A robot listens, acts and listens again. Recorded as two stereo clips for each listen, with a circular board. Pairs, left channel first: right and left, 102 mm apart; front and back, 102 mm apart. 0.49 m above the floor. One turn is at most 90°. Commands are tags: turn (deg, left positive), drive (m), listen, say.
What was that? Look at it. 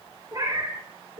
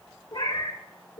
<turn deg="40"/>
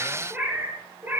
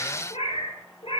<turn deg="20"/>
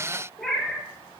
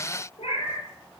<say>Found it: a cat meowing, straight ahead, 2 to 4 m away.</say>